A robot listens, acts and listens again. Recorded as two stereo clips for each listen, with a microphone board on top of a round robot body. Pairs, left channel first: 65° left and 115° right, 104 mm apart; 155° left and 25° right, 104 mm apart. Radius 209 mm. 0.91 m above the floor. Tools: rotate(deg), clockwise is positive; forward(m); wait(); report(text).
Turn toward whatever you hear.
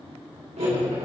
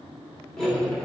rotate(120)
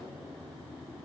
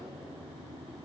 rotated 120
wait()
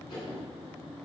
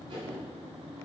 rotate(-20)
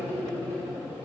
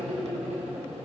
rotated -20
report("Found it: cutlery clinking, straight ahead, 2 to 4 m away.")